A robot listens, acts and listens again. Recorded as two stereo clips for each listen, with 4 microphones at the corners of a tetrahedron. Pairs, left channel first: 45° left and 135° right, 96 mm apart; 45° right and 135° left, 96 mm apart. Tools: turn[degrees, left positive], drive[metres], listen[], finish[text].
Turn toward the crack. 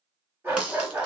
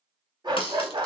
Thought: The crack: 60° right.
Action: turn[-60]
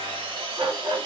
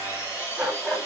Action: finish[Facing where the crack came from. I can't hear it now.]